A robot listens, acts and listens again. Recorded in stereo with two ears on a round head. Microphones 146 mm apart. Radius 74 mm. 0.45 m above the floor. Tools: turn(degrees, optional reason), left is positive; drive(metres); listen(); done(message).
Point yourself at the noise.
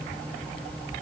listen()
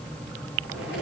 turn(degrees=-75, reason="The zipper: about 75° right or 105° right.")
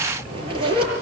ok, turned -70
turn(degrees=-35, reason="So it is at 35° right.")
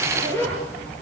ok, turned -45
turn(degrees=15, reason="The zipper is now 15° left.")
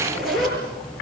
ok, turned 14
done("Found it: a zipper, straight ahead.")